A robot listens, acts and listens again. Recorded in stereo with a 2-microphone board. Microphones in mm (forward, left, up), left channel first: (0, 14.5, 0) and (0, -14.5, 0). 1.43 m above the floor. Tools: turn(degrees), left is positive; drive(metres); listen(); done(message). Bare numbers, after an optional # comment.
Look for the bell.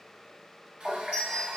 # The bell: about 40° right or 140° right.
turn(-40)
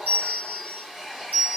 # So it is at 95° right.
turn(-95)
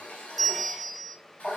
done("Facing the bell, 1 to 2 m away.")